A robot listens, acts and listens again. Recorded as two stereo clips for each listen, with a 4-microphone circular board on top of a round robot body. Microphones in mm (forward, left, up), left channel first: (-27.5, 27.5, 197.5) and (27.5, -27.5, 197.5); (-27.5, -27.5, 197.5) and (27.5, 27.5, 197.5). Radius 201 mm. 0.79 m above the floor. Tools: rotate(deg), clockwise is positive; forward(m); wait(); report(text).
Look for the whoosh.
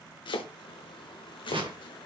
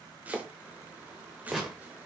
rotate(45)
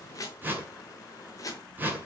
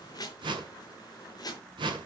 rotate(-25)
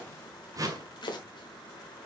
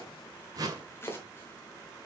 report("Found it: a whoosh, straight ahead, 1 to 2 m away.")